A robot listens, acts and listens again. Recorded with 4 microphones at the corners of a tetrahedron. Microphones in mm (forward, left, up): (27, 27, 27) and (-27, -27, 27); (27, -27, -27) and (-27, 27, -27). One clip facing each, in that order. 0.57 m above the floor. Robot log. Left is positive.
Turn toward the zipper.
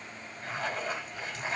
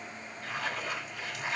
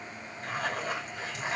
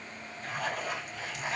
note: The zipper: 10° right.
cmd yaw -10
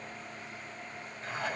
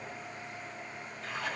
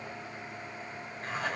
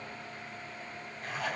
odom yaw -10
end: Facing the zipper.